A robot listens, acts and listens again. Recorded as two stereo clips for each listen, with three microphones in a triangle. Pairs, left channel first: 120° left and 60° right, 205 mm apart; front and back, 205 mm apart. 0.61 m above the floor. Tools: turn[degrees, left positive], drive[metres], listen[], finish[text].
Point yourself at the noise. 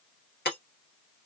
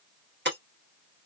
Thought: The breaking glass: 155° left.
Action: turn[155]
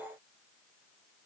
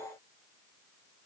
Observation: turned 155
Action: finish[I heard breaking glass from this way, but can't make it out now.]